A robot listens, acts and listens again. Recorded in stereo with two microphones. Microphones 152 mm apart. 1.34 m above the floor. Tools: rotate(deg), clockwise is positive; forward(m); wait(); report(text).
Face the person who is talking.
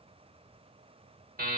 wait()
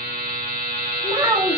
rotate(25)
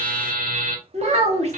rotate(125)
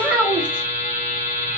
rotate(10)
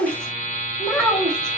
report("Facing the child speaking, 1 to 2 m away.")